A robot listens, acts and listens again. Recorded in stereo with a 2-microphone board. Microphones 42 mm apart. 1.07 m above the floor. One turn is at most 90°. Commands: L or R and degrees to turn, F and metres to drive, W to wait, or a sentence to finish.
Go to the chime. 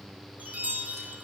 R40
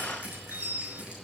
R90
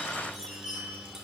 R10
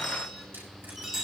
F1.0
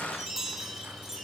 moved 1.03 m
R10
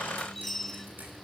F1.0
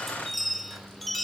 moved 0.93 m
F1.0
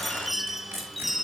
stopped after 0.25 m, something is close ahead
I am next to the chime.